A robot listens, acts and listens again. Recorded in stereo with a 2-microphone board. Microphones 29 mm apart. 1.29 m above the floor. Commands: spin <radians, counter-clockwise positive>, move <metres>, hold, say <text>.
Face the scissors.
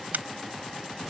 spin -1.57
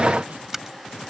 spin -0.26
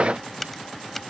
say Found it: scissors, straight ahead.